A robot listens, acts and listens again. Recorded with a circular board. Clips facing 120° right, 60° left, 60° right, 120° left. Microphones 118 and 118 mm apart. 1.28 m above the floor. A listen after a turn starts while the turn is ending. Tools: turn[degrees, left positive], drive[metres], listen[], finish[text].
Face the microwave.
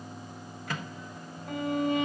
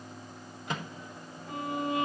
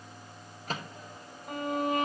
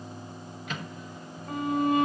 Thought: The microwave: 10° right.
Action: turn[-10]
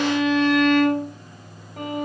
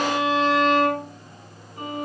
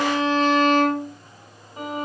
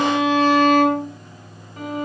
Action: listen[]
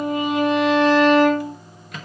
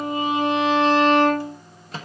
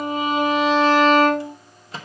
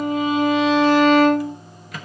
Action: finish[Facing the microwave, 1 to 2 m away.]